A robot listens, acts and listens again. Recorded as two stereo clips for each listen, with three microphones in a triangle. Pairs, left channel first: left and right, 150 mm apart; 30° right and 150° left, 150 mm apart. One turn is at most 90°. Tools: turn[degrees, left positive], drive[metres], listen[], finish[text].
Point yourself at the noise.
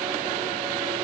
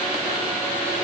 Action: listen[]
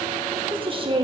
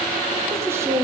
Thought: The woman speaking: 140° right.
Action: turn[-90]
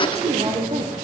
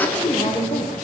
Thought: The woman speaking is now 55° right.
Action: turn[-55]
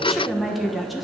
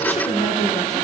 Action: finish[Found it: a woman speaking, straight ahead, 1 to 2 m away.]